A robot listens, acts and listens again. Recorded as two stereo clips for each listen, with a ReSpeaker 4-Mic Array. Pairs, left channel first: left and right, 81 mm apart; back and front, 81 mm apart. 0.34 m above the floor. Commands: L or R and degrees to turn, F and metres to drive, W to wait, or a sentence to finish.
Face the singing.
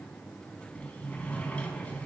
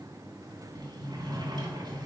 W
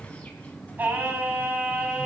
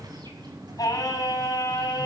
R165
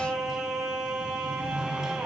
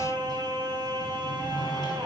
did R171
R15
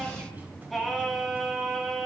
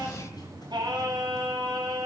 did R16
Facing the singing, 2 to 4 m away.